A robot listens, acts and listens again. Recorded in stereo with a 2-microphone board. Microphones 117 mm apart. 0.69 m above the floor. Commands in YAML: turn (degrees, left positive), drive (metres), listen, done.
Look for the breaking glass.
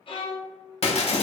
turn: 55
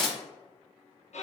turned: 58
done: "Facing the breaking glass."